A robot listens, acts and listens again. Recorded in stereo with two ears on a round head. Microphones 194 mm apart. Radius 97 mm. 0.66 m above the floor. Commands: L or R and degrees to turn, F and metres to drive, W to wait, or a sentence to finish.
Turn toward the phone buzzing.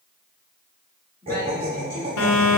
L90
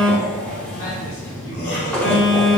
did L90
Found it: a phone buzzing, straight ahead, under 1 m away.